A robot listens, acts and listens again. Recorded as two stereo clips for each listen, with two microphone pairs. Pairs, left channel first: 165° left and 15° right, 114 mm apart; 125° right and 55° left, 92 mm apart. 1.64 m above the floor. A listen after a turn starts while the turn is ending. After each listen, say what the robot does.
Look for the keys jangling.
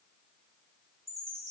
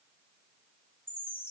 Keep listening.
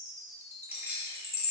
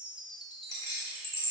Turn 90° right.
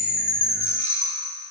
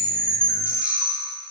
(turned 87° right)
Keep listening.
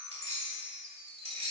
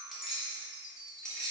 Turn 40° right.
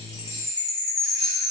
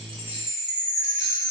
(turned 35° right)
Keep listening.
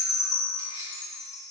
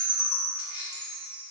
Turn 15° right.
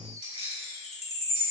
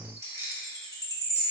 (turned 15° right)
Facing the keys jangling.